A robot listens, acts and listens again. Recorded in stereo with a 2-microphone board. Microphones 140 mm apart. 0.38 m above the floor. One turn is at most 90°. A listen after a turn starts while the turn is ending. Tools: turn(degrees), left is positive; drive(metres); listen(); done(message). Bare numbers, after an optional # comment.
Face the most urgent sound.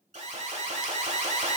# The alarm: about 55° right or 125° right.
turn(-55)
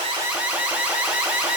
# So it is at 10° right.
turn(-10)
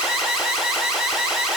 done("Facing the alarm, 1 to 2 m away.")